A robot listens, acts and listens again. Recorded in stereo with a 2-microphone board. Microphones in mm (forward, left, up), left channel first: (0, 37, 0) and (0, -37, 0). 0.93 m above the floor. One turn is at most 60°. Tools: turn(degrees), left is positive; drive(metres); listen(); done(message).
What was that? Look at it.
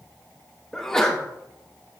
turn(degrees=30)
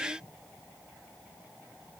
listen()
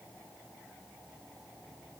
done("I heard a sneeze, but can't make it out now. It was about 20° right or 140° left.")